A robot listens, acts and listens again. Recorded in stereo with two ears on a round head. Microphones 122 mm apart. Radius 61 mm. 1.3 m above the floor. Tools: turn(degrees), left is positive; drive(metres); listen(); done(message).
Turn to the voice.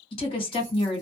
turn(degrees=40)
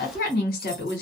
turn(degrees=100)
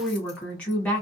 turn(degrees=10)
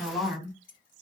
done("Facing the woman speaking.")